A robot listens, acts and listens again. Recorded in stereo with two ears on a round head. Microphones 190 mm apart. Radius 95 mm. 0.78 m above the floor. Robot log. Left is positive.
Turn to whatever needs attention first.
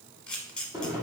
cmd idle
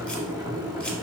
cmd idle
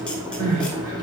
cmd yaw -90
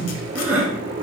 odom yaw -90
note: So it is at 10° right.
cmd yaw -10
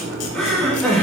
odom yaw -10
end: Facing the crying, 2 to 4 m away.